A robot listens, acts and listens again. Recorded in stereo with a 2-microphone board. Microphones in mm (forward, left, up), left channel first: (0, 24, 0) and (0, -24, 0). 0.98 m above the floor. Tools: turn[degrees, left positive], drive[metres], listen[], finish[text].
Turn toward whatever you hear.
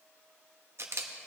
Thought: The camera shutter: about 60° right or 120° right.
Action: turn[-60]
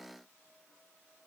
Action: listen[]
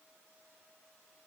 Action: listen[]
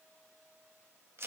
Thought: So it is at 55° right.
Action: turn[-55]
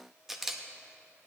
Action: finish[Found it: a camera shutter, straight ahead.]